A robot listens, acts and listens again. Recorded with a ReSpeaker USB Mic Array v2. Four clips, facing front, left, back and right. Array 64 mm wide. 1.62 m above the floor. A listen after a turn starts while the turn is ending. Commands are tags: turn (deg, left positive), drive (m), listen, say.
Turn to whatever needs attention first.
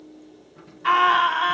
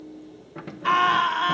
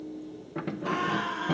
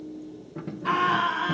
<turn deg="25"/>
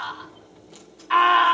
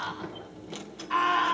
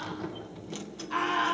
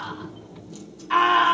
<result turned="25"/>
<turn deg="-15"/>
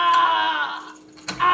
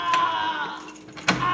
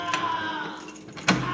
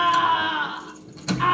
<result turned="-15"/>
<say>Found it: a scream, straight ahead.</say>